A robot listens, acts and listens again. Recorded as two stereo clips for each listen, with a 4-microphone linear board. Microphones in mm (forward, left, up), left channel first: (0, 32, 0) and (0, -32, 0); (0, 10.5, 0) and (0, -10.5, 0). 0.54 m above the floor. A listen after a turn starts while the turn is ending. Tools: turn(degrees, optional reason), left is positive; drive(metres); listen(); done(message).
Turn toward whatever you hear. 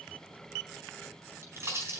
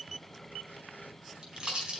turn(degrees=-45, reason="The pop: about 45° right or 135° right.")
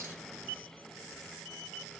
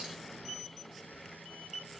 listen()
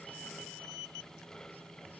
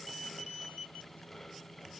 done("I heard a pop, but can't make it out now. It was about straight ahead or 90° right.")